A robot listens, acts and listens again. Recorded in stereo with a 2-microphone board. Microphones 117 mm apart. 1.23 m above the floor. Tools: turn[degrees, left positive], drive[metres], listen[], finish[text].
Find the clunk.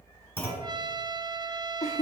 Thought: The clunk: about 20° left or 160° left.
Action: turn[20]
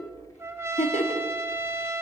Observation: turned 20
Action: listen[]
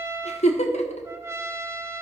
Action: finish[I heard a clunk, but can't make it out now. It was about straight ahead or 140° left.]